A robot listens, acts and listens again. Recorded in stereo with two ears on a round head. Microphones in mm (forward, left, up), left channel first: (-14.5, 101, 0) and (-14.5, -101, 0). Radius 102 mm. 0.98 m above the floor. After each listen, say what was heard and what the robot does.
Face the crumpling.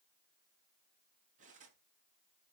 Keep listening.
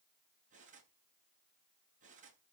Keep listening.
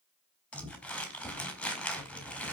Turn 30° left.
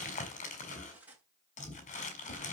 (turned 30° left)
So it is at 145° left. Turn 145° left.
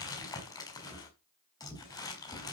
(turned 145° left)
The crumpling is now 15° left. Turn 15° left.
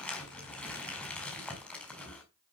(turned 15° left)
Found it: crumpling, straight ahead.